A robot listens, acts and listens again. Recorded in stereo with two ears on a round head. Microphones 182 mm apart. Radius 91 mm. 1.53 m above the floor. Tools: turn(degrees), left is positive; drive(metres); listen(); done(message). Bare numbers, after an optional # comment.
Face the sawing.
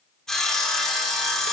turn(30)
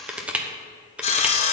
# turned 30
# So it is at 150° left.
turn(150)
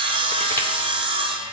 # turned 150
# The sawing is now 25° right.
turn(-25)
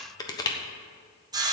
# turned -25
# The sawing is now 20° right.
turn(-20)
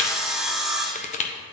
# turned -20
done("Found it: sawing, straight ahead.")